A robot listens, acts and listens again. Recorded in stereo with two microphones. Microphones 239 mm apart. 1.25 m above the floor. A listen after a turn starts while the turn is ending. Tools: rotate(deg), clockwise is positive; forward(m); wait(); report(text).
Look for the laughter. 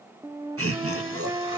rotate(90)
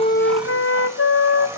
wait()
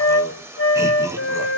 wait()
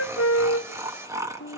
rotate(15)
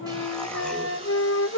wait()
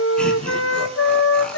wait()
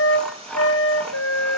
report("Facing the laughter.")